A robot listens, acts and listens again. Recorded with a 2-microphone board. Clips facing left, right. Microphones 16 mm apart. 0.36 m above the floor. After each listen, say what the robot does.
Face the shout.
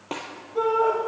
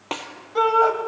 Turn 55° right.
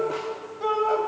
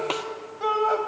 Turn 15° right.
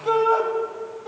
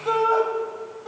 Found it: a shout, straight ahead, 1 to 2 m away.